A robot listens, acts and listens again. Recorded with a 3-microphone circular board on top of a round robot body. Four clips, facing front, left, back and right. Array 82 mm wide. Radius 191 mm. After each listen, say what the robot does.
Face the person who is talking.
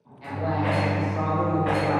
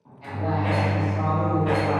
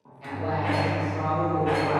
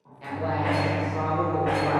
Turn 85° right.
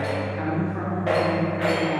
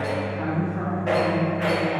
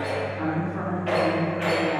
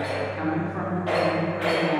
Turn 90° right.
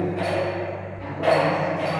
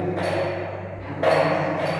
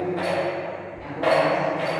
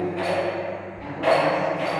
Turn 30° right.
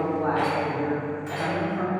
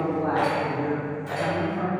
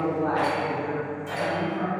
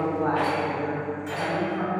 Turn 20° right.
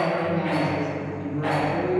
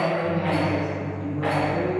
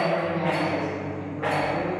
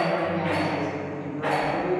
Facing the woman speaking.